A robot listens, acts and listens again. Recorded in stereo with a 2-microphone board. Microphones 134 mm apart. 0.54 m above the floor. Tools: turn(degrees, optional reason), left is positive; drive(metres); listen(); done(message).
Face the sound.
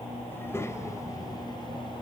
turn(degrees=25, reason="The child speaking: about 25° left or 155° left.")
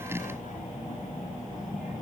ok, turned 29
turn(degrees=100, reason="So it is at 100° left.")
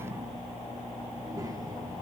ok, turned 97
turn(degrees=-20, reason="The child speaking is now 20° right.")
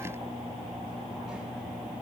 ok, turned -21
listen()
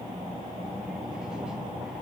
done("Facing the child speaking.")